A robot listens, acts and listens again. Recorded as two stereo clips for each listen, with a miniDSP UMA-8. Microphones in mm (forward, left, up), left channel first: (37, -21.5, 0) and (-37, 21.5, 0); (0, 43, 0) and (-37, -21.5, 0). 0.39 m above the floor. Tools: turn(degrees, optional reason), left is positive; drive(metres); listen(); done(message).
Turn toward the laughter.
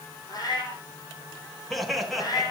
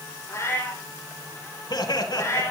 turn(degrees=60, reason="The laughter: 60° left.")
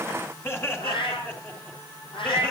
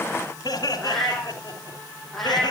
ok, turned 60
turn(degrees=35, reason="The laughter is now 35° left.")
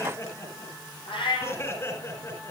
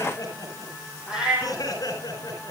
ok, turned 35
turn(degrees=25, reason="The laughter is now 25° left.")
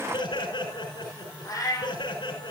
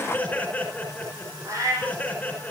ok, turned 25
turn(degrees=-10, reason="The laughter is now 10° right.")
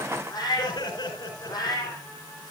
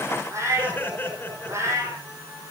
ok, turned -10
done("Facing the laughter.")